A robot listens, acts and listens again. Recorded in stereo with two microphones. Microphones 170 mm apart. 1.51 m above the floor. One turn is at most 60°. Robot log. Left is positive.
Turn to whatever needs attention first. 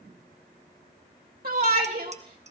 note: The shout: about 60° right or 120° right.
cmd yaw -60
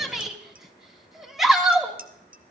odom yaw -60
end: Facing the shout.